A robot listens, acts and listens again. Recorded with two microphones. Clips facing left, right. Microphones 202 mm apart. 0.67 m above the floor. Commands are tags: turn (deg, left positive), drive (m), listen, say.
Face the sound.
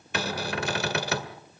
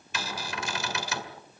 <turn deg="60"/>
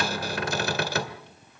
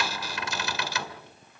<turn deg="55"/>
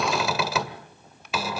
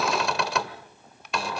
<say>Found it: a cupboard door, straight ahead, 1 to 2 m away.</say>